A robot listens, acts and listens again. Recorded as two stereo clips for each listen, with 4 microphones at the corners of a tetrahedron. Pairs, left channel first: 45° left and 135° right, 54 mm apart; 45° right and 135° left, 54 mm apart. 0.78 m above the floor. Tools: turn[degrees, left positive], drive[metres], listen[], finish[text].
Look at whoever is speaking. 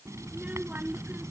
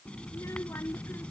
Thought: The child speaking: 75° right.
Action: turn[-75]
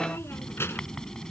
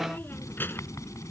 Action: finish[Found it: a child speaking, straight ahead.]